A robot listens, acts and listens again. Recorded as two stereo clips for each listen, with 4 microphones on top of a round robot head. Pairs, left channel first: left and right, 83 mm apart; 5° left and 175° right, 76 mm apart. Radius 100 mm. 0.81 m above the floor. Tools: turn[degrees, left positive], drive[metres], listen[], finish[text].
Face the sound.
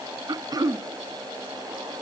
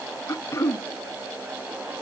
Thought: The throat clearing: 50° right.
Action: turn[-50]
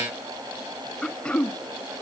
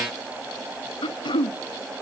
Thought: The throat clearing is now 10° left.
Action: turn[10]
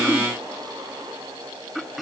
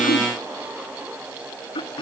Action: finish[Facing the throat clearing, under 1 m away.]